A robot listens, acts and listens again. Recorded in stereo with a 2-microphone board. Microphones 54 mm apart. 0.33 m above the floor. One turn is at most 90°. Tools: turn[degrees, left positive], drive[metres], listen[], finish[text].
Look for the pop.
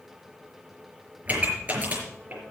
Thought: The pop: about 25° right or 155° right.
Action: turn[-25]
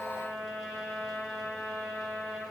Action: listen[]
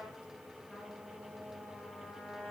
Action: finish[I heard a pop, but can't make it out now. It was about straight ahead or 130° right.]